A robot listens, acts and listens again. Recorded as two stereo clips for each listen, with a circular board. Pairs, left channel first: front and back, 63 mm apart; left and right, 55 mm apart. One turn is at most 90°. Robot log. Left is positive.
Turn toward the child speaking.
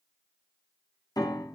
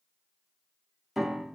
cmd idle
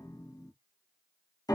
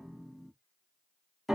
cmd idle
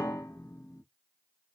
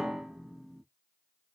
end: I can't make out a child speaking, only a piano.